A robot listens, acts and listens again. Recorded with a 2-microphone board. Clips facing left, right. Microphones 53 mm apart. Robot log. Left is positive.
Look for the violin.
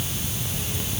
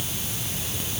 cmd idle
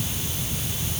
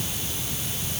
cmd idle
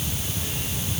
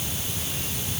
end: I can't make out a violin.